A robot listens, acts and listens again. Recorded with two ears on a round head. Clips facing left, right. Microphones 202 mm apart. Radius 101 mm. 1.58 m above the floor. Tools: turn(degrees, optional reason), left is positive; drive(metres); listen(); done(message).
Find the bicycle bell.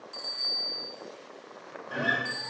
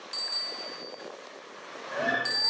turn(degrees=-60, reason="The bicycle bell: about 60° right or 120° right.")
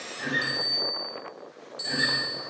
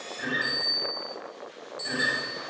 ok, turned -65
turn(degrees=10, reason="So it is at 10° left.")
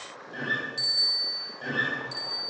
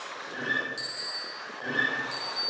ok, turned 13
done("Facing the bicycle bell, over 4 m away.")